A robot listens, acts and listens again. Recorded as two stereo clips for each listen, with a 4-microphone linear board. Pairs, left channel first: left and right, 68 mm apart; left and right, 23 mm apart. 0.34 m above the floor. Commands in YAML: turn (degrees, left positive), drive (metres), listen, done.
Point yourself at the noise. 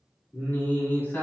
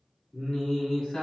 turn: 30
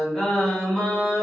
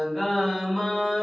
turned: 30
turn: 20
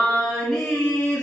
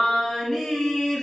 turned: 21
turn: 20
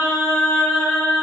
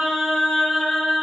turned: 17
turn: 30
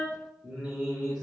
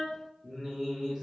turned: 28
done: "Found it: singing, straight ahead, 2 to 4 m away."